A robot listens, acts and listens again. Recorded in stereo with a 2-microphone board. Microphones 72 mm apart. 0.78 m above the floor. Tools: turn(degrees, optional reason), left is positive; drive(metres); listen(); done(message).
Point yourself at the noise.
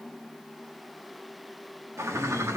turn(degrees=-40, reason="The bird: about 40° right or 140° right.")
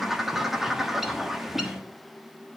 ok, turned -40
done("Facing the bird.")